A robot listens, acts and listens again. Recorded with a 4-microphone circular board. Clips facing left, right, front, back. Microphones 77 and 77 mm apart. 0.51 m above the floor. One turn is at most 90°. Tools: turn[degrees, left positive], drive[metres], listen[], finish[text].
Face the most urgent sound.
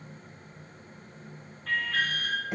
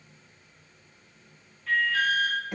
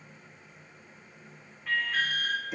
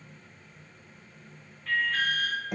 Thought: The alarm: 80° left.
Action: turn[80]
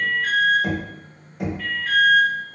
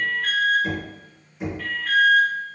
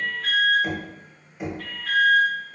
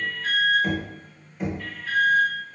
Action: finish[Found it: an alarm, straight ahead.]